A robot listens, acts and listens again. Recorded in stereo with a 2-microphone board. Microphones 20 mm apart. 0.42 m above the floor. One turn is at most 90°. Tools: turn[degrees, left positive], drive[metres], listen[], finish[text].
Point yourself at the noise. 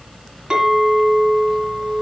Thought: The clink: about 45° right or 135° right.
Action: turn[-45]
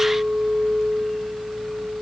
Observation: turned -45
Action: finish[Facing the clink.]